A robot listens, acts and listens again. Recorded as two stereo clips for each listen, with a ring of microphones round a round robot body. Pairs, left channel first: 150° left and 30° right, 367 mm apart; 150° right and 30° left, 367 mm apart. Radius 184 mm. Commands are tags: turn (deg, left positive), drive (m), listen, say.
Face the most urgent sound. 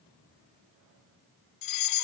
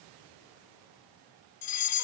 <turn deg="175"/>
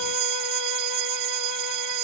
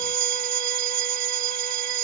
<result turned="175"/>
<say>Found it: a fire alarm, straight ahead.</say>